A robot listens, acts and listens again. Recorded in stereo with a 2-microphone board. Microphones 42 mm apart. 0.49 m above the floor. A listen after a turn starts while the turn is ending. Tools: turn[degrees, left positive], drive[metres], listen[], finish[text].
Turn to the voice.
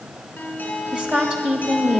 Thought: The woman speaking: about 25° right or 155° right.
Action: turn[-25]
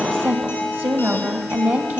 Thought: So it is at 130° right.
Action: turn[-130]
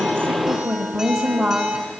Thought: The woman speaking is now 10° right.
Action: turn[-10]
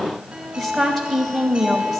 Action: finish[Found it: a woman speaking, straight ahead, 2 to 4 m away.]